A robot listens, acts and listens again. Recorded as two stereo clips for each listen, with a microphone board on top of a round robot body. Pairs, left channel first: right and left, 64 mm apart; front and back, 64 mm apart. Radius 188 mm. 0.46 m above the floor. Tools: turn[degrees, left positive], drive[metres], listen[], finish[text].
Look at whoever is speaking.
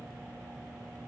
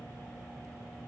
Action: listen[]
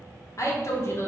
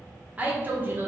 Thought: The woman speaking: 130° right.
Action: turn[-130]
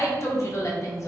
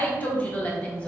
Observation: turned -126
Thought: The woman speaking is now 70° right.
Action: turn[-70]
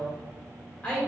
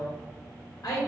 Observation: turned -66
Thought: The woman speaking is now 20° right.
Action: turn[-20]
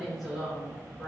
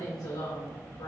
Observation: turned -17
Action: finish[Found it: a woman speaking, straight ahead, 2 to 4 m away.]